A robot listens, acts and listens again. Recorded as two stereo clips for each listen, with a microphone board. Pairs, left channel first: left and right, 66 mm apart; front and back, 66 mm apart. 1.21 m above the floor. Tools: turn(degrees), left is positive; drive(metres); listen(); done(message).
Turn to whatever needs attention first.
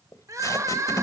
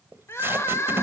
turn(degrees=-50)
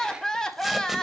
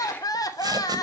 turn(degrees=10)
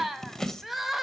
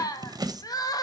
done("Facing the crying, under 1 m away.")